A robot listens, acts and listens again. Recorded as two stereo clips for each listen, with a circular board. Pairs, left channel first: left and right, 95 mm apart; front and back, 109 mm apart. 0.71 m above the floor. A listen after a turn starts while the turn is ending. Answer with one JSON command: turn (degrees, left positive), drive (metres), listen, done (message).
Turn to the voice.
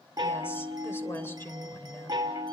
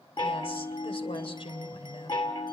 {"turn": 25}
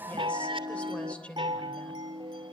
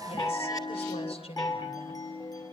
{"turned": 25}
{"turn": 15}
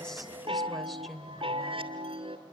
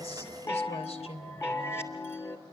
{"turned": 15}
{"done": "Facing the woman speaking."}